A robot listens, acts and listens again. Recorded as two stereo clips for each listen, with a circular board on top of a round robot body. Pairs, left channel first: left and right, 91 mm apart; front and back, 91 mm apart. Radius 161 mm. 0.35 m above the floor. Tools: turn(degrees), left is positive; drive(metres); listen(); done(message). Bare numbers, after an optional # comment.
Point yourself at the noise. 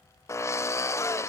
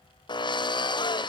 # The drill: 35° left.
turn(35)
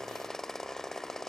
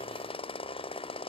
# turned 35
done("Found it: a drill, straight ahead, 1 to 2 m away.")